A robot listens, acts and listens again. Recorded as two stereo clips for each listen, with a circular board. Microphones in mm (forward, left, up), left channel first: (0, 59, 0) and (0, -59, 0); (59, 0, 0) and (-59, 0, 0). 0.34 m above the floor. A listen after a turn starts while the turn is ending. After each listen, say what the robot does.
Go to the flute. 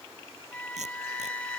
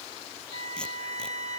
Turn 170° left.
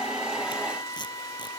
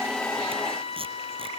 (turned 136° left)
Turn 30° left.
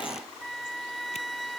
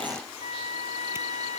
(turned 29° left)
Drive 1.0 m forward.
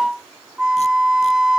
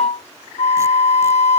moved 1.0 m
Drive 1.0 m forward.
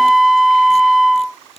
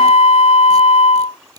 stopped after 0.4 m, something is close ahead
I am next to the flute.